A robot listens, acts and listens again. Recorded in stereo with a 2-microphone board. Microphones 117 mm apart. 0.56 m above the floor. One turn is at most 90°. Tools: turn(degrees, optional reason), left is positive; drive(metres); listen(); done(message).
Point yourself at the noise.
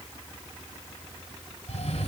turn(degrees=60, reason="The cough: about 60° left or 120° left.")
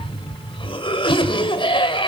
turn(degrees=50, reason="So it is at 50° left.")
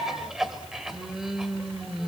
done("Found it: a cough, straight ahead.")